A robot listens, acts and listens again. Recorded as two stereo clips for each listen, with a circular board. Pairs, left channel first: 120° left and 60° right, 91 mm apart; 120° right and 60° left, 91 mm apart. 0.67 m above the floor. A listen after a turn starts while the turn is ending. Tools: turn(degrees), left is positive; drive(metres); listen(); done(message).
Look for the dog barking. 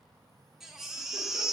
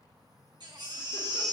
listen()
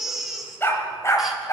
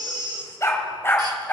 turn(degrees=170)
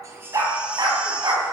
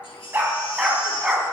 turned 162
turn(degrees=-25)
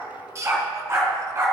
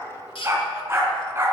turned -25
done("Found it: a dog barking, straight ahead, 2 to 4 m away.")